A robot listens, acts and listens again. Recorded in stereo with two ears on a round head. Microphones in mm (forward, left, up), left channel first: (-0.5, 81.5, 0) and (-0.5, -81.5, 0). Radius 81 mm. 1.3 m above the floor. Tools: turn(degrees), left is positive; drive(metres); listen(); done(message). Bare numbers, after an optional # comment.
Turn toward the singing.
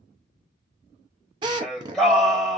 turn(30)
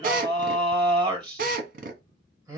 # So it is at 25° right.
turn(-25)
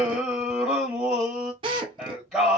done("Facing the singing, 2 to 4 m away.")